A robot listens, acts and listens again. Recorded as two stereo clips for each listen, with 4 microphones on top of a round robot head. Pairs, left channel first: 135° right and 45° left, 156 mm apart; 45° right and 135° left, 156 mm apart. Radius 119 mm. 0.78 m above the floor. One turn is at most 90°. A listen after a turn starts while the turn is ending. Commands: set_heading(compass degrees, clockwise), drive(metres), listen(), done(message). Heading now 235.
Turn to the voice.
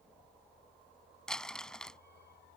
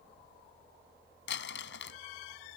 listen()
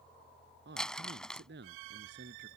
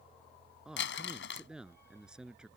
set_heading(185)
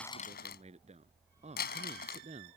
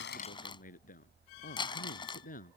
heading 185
done("Facing the man speaking.")